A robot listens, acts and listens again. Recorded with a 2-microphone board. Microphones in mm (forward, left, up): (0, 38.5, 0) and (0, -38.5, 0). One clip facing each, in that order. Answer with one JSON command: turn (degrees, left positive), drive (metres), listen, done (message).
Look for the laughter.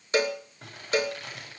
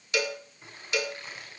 {"listen": true}
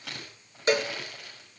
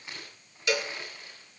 {"listen": true}
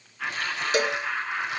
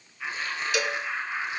{"turn": 75}
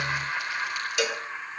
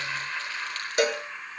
{"turn": 25}
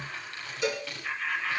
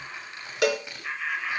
{"done": "Found it: laughter, straight ahead."}